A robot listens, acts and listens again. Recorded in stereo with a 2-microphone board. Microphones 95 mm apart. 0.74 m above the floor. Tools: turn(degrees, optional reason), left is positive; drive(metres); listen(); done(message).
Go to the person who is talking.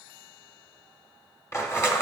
listen()
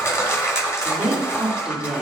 turn(degrees=-30)
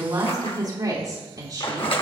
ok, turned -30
turn(degrees=-140, reason="So it is at 140° right.")
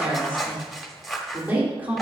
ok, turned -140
turn(degrees=-20, reason="The woman speaking is now 20° right.")
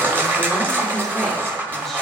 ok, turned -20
listen()
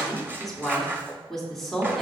drive(metres=1.0)
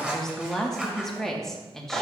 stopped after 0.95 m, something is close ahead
done("I am next to the woman speaking.")